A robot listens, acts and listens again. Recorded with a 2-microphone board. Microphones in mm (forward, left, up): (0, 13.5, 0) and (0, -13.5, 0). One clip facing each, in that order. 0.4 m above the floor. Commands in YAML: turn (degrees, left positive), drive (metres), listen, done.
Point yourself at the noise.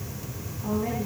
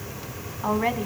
turn: -55
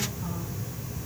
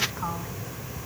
listen: true
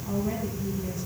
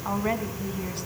listen: true
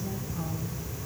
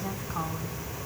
done: "I heard a woman speaking, but can't make it out now. It was about straight ahead or 70° right."